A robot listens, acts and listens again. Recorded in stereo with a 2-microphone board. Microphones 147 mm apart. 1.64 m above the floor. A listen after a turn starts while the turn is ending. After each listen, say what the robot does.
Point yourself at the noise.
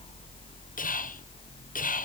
Turn 70° left.
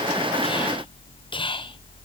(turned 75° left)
Turn 35° left.
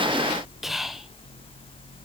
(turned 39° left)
Found it: whispering, straight ahead, 1 to 2 m away.